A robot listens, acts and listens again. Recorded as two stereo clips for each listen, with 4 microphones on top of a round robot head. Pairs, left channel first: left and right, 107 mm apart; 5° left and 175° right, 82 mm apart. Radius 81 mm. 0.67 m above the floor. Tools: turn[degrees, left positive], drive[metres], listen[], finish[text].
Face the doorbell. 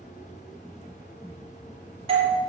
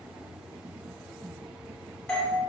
Thought: The doorbell: 80° right.
Action: turn[-80]
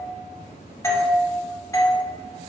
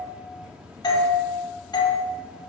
Thought: The doorbell is now 30° left.
Action: turn[30]
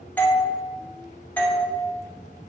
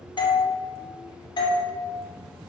Thought: The doorbell is now 15° left.
Action: turn[15]
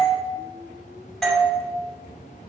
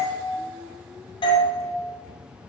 Action: finish[Facing the doorbell, 2 to 4 m away.]